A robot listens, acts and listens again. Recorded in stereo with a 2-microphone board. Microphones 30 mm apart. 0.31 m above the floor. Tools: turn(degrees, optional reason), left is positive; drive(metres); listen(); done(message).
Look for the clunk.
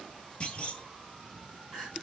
turn(degrees=35, reason="The clunk: about 35° left or 145° left.")
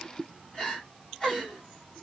listen()
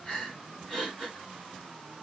done("I heard a clunk, but can't make it out now. It was about straight ahead or 110° left.")